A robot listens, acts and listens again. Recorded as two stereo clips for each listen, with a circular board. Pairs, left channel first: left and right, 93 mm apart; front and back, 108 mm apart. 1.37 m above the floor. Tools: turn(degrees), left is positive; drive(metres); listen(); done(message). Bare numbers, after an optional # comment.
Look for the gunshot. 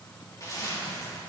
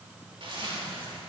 listen()
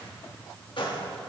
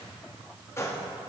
# The gunshot: 65° left.
turn(65)
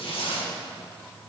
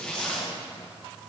done("I heard a gunshot from this way, but can't make it out now.")